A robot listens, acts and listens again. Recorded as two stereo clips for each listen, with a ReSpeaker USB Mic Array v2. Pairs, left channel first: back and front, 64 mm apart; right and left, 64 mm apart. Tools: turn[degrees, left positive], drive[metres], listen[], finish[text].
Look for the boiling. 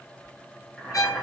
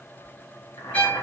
Thought: The boiling: 100° right.
Action: turn[-100]
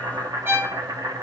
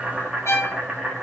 Thought: The boiling is now 10° left.
Action: turn[10]
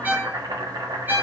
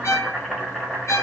Action: finish[Facing the boiling.]